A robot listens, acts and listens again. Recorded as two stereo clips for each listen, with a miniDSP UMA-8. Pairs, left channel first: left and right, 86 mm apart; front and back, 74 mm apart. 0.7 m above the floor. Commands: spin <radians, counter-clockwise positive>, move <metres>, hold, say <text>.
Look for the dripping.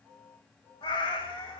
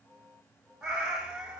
hold
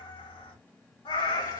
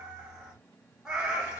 hold
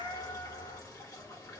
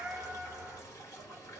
spin 0.79
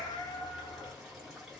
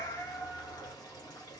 say Found it: dripping, straight ahead, 1 to 2 m away.